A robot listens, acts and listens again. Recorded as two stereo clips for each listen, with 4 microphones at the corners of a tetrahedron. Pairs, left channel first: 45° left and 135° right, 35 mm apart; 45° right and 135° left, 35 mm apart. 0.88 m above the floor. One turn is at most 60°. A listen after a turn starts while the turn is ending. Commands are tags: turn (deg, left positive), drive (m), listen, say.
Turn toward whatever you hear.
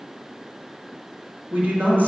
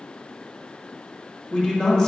<turn deg="-60"/>
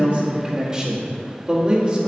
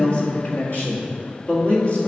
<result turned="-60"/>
<turn deg="-60"/>
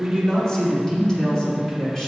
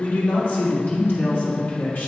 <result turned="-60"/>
<turn deg="-30"/>
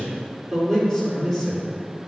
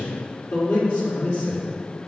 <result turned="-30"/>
<turn deg="-35"/>
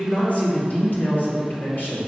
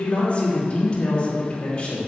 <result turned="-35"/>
<turn deg="15"/>
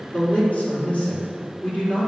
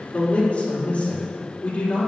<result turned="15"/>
<say>Found it: a man speaking, straight ahead.</say>